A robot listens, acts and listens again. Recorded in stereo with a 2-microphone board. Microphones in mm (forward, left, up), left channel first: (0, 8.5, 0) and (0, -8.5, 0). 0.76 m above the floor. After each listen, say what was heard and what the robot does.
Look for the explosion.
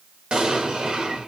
The explosion: about 70° right or 110° right. Turn 70° right.
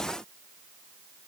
Keep listening.
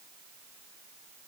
I heard an explosion, but can't make it out now. It was about straight ahead or 40° right.